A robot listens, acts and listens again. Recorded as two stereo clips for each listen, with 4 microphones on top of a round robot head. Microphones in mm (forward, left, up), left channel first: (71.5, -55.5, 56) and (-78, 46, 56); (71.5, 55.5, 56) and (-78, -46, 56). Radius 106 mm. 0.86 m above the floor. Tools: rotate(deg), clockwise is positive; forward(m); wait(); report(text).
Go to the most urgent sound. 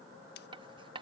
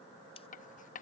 wait()
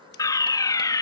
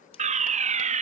rotate(105)
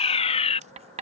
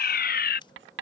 rotate(-15)
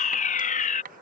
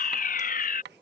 forward(1.0)
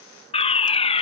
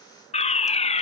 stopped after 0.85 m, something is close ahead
report("Arrived at the fire alarm, straight ahead.")